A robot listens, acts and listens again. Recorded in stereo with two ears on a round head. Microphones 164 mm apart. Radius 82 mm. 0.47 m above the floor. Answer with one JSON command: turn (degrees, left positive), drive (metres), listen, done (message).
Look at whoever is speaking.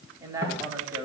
{"turn": -15}
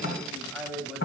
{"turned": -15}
{"done": "Found it: a man speaking, straight ahead, 2 to 4 m away."}